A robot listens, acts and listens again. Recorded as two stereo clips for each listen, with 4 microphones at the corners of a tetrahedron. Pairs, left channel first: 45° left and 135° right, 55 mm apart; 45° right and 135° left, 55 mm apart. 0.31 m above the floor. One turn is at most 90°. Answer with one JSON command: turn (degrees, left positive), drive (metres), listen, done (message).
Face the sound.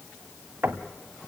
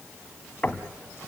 {"turn": -90}
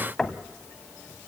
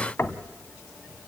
{"turn": -30}
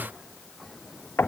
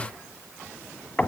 {"turn": 10}
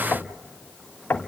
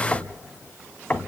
{"done": "Found it: knocking, straight ahead, 1 to 2 m away."}